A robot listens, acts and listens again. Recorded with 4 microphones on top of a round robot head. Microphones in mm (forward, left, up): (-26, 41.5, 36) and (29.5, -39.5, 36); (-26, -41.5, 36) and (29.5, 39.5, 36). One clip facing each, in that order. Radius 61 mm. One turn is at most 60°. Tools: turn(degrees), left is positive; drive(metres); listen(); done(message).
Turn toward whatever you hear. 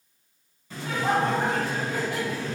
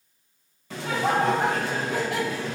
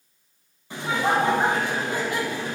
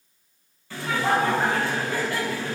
turn(degrees=-55)
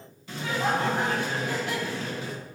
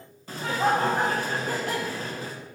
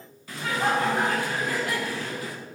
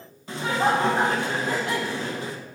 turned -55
done("Facing the laughter, under 1 m away.")